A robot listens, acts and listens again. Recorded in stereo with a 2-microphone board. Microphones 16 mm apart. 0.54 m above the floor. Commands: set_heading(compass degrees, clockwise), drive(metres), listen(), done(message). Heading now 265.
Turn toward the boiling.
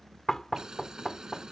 set_heading(310)
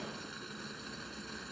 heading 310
done("Facing the boiling.")